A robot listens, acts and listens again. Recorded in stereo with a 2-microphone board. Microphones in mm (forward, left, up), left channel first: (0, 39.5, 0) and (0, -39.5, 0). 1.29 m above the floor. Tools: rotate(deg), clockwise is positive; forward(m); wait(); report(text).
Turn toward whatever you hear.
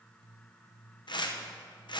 rotate(-65)
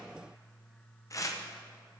rotate(-45)
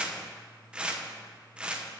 rotate(15)
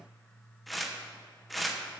report("Found it: tearing paper, straight ahead.")